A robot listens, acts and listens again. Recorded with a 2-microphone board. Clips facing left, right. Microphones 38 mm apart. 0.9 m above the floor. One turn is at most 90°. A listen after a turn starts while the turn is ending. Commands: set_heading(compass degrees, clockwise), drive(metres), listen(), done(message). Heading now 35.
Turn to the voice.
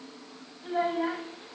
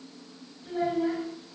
set_heading(0)
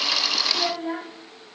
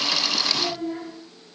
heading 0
set_heading(270)
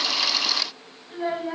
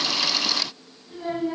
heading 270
set_heading(230)
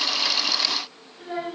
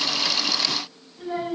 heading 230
set_heading(220)
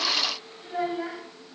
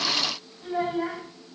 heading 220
done("Facing the child speaking, 2 to 4 m away.")